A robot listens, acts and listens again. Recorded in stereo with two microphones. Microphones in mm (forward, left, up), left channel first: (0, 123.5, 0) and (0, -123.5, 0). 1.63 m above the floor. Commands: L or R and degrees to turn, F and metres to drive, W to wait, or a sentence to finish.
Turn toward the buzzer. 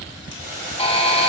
L25
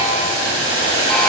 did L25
W
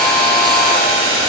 W
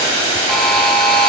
Found it: a buzzer, straight ahead.